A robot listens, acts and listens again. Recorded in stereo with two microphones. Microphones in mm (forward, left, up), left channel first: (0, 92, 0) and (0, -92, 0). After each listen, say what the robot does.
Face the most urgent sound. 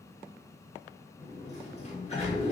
Keep listening.
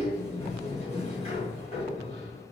Keep listening.
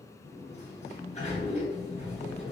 I can't make out anything urgent to turn to.